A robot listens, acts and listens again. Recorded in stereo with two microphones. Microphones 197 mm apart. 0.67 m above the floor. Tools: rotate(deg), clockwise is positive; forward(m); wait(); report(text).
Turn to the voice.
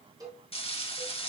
wait()
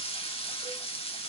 wait()
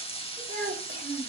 rotate(90)
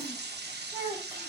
rotate(10)
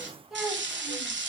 report("Found it: a child speaking, straight ahead.")